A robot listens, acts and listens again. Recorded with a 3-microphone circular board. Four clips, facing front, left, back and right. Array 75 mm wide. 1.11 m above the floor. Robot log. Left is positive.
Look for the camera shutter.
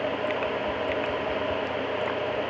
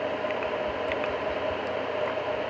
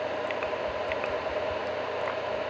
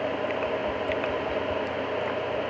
cmd idle
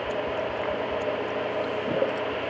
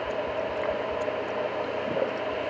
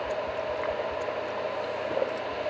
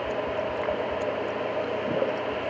cmd idle
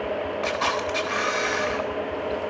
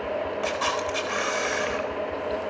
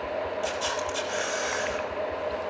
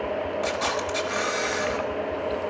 note: The camera shutter: 25° left.
cmd yaw +25
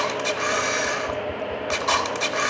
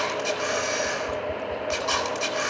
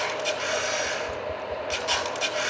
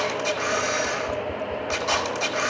end: Facing the camera shutter.